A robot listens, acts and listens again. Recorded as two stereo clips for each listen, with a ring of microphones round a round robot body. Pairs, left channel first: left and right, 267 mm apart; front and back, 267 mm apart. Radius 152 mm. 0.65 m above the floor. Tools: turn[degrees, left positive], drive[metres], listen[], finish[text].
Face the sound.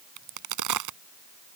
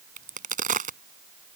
Thought: The crack: 120° right.
Action: turn[-120]
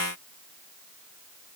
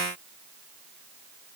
Action: finish[I heard a crack from this way, but can't make it out now.]